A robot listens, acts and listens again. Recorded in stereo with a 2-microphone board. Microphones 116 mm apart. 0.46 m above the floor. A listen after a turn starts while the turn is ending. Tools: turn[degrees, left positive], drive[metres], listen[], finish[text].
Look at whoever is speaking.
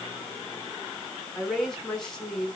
Action: turn[30]
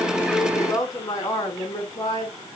Thought: So it is at 145° left.
Action: turn[145]
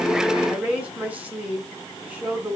Thought: The woman speaking is now 10° right.
Action: turn[-10]
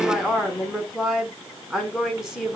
Action: finish[Found it: a woman speaking, straight ahead.]